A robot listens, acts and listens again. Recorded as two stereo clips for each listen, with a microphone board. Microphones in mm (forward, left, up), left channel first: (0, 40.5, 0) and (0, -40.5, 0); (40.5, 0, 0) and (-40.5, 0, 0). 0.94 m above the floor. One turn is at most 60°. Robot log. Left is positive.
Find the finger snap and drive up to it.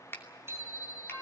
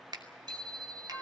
note: The finger snap: 150° left.
cmd yaw +60
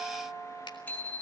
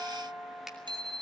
note: Nothing new. It was at 90° left.
cmd yaw +60
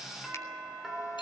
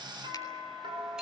note: Nothing new. It was at 30° left.
cmd yaw +30
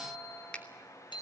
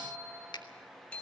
note: The finger snap is now 10° left.
cmd yaw +10
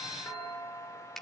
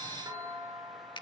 cmd fwd 1.0
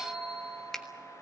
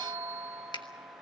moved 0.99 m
cmd fwd 1.0
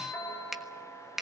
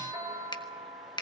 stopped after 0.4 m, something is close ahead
end: I am next to the finger snap.